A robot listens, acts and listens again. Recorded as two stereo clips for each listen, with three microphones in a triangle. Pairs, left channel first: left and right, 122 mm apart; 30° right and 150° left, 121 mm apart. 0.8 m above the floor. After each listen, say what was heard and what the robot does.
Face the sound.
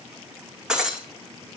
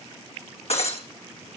Facing the breaking glass.